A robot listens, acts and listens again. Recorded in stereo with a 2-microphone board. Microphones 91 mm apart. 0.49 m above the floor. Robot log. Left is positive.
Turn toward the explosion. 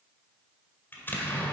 note: The explosion: about 25° left or 155° left.
cmd yaw +25
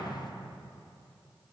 note: So it is at 130° left.
cmd yaw +130
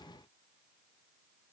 end: I heard an explosion from this way, but can't make it out now.